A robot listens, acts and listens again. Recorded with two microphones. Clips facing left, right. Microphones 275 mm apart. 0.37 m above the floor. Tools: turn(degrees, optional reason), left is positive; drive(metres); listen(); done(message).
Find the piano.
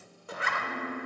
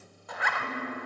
turn(degrees=-45, reason="The piano: about 45° right or 135° right.")
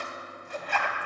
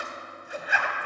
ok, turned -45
listen()
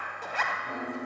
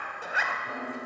done("Facing the piano, 1 to 2 m away.")